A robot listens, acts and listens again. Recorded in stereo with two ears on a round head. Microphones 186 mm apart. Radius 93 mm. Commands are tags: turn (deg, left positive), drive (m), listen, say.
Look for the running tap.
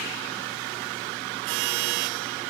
<listen/>
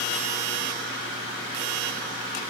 <listen/>
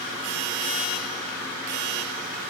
<say>I can't make out a running tap.</say>